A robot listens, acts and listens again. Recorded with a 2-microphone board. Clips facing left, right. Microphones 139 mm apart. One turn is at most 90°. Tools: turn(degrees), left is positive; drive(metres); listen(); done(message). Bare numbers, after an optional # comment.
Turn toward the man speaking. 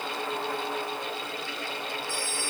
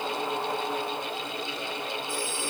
listen()
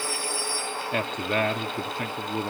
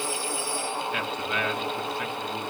# The man speaking: about 45° left or 135° left.
turn(45)
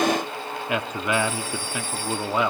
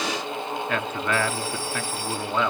# So it is at 15° left.
turn(15)
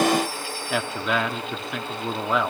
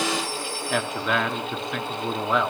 done("Facing the man speaking.")